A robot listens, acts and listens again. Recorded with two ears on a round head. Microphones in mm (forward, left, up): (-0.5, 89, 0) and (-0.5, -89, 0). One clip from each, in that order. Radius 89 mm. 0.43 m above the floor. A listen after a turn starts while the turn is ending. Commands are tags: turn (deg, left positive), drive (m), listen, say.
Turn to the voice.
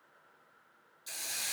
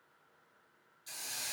<listen/>
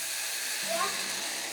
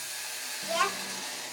<turn deg="-65"/>
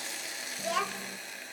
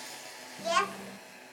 <turn deg="-30"/>
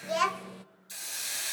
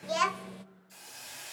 <say>Found it: a child speaking, straight ahead, under 1 m away.</say>